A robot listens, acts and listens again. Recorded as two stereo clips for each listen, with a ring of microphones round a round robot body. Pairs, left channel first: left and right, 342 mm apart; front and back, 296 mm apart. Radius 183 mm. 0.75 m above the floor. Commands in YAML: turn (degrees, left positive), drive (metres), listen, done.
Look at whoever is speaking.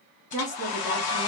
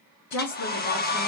turn: 20
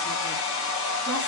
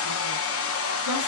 listen: true
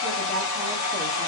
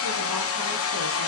listen: true
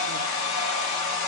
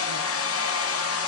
done: "Facing where the woman speaking came from. I can't hear it now."